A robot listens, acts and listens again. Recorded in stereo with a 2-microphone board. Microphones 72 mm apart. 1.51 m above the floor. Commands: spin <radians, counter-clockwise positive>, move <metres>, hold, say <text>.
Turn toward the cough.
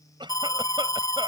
spin -1.57
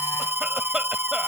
hold
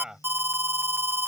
spin -0.17
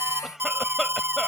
say Facing the cough.